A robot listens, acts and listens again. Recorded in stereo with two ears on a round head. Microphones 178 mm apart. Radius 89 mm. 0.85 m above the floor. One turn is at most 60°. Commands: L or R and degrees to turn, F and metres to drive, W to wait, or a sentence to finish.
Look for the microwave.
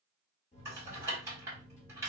L35
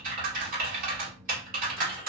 L10
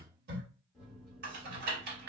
Found it: a microwave, straight ahead, 1 to 2 m away.